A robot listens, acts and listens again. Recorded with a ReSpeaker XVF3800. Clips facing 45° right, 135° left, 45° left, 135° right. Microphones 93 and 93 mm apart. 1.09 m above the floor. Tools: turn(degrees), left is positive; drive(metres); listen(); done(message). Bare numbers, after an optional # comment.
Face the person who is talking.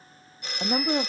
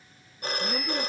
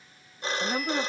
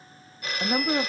# The woman speaking: 60° right.
turn(-60)
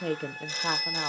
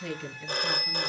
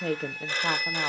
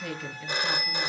done("Facing the woman speaking.")